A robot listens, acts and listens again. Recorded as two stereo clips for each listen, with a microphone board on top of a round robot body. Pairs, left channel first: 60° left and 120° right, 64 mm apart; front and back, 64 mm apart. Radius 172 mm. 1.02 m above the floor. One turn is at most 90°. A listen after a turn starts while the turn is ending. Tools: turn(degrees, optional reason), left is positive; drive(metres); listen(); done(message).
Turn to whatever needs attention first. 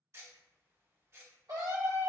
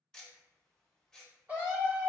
turn(degrees=-90, reason="The scream: 115° right.")
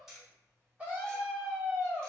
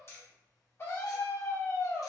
turn(degrees=-50, reason="The scream is now 50° right.")
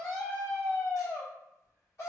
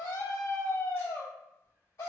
turn(degrees=10, reason="The scream is now 10° left.")
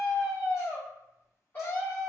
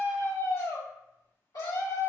done("Facing the scream.")